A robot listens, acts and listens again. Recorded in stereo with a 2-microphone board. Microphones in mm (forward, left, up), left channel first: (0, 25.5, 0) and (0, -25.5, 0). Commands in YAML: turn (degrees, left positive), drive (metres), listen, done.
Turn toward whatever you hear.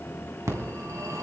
turn: -90
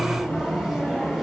done: "Found it: a phone ringing, straight ahead."